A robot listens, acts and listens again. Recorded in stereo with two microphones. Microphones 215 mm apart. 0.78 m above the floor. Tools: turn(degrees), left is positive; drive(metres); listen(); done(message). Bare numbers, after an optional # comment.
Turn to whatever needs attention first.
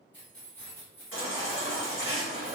# The baby crying: about 70° left or 110° left.
turn(70)
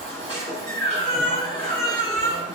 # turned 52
# So it is at 25° left.
turn(25)
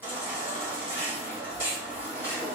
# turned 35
# The baby crying is now 10° right.
turn(-10)
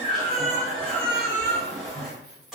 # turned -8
done("Facing the baby crying, 1 to 2 m away.")